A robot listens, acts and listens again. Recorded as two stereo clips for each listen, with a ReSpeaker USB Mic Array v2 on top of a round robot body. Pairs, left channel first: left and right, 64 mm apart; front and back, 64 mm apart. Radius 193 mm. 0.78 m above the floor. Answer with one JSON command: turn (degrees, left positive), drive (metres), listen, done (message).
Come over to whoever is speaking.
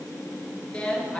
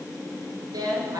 {"turn": 170}
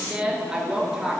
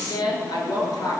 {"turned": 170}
{"drive": 1.0}
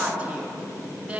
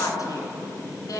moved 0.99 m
{"turn": -15}
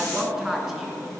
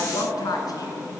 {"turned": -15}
{"drive": 1.0}
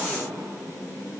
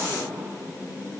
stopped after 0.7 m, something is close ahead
{"listen": true}
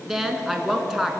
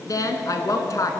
{"done": "Arrived at the woman speaking, straight ahead."}